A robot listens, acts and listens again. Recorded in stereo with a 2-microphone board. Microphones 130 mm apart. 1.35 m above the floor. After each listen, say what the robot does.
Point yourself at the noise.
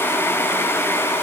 Keep listening.
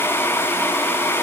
Keep listening.
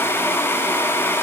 I can't make out anything to turn to.